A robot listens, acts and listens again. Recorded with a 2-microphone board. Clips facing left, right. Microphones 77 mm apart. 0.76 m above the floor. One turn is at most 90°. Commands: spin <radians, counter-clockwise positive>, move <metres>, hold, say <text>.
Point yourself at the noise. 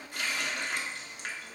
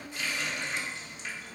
spin 1.05
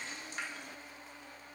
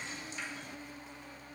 spin 0.96
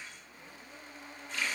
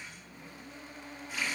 spin -0.17
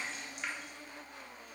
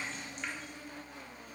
say Found it: a running tap, straight ahead.